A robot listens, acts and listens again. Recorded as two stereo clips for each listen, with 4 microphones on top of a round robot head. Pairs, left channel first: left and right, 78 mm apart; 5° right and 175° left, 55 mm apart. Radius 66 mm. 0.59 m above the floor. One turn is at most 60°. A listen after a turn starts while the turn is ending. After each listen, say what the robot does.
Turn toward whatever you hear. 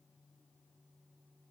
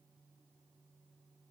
Keep listening.
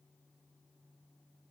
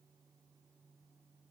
Keep listening.
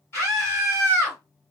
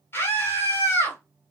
Turn 35° left.
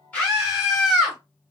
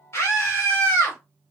Found it: a scream, straight ahead.